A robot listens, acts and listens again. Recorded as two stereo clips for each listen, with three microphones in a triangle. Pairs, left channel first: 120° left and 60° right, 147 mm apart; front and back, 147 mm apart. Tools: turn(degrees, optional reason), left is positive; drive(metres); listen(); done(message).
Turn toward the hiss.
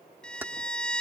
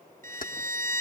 listen()
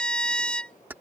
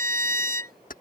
listen()
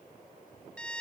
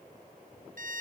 done("I can't make out a hiss, only a violin.")